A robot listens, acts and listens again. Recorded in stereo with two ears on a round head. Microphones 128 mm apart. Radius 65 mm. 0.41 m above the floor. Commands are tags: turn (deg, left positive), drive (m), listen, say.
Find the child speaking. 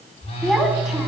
<turn deg="30"/>
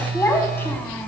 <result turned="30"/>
<turn deg="165"/>
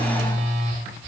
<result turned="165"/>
<listen/>
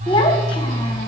<turn deg="40"/>
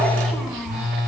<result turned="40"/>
<say>Facing the child speaking, 2 to 4 m away.</say>